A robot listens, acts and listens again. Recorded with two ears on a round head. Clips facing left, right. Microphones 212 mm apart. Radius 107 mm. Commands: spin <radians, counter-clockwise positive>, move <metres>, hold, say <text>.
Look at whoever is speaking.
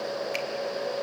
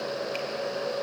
hold
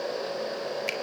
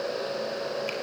hold
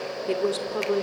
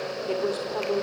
spin 0.52
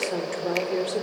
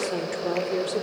say Found it: a woman speaking, straight ahead.